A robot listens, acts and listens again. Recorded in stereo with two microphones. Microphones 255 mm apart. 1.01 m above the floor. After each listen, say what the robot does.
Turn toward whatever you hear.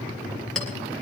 Turn 30° left.
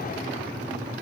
Keep listening.
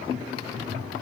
Keep listening.
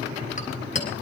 Turn 150° left.
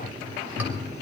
Keep listening.
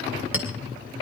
Found it: a clink, straight ahead.